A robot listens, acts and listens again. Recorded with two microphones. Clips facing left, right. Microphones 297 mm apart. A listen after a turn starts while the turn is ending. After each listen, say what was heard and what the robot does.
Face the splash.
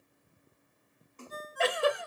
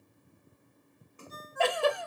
Turn 30° right.
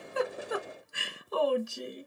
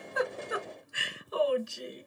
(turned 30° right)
Keep listening.
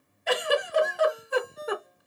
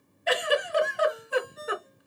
I heard a splash, but can't make it out now. It was about 20° left or 140° right.